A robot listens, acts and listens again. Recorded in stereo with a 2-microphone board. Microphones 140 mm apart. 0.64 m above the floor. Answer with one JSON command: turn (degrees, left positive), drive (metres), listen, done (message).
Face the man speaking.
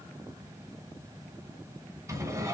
{"listen": true}
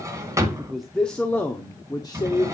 {"turn": 35}
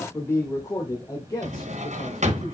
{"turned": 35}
{"turn": 30}
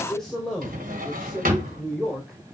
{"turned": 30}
{"done": "Found it: a man speaking, straight ahead, 2 to 4 m away."}